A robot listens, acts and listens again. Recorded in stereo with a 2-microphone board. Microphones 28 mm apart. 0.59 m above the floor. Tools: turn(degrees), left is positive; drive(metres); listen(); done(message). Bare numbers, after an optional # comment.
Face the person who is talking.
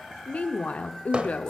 # The woman speaking: about 55° left or 125° left.
turn(55)
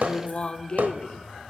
# So it is at 50° left.
turn(50)
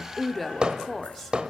done("Facing the woman speaking, 1 to 2 m away.")